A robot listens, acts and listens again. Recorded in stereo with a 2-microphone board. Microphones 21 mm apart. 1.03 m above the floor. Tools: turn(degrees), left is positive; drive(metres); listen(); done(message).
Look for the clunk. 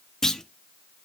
turn(degrees=25)
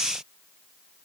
listen()
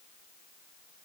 done("I heard a clunk, but can't make it out now. It was about straight ahead or 130° left.")